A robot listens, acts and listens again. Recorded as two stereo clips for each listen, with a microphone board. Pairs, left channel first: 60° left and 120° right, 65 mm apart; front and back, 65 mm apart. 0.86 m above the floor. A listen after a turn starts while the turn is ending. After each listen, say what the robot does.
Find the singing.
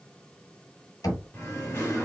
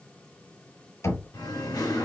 Facing the singing, 1 to 2 m away.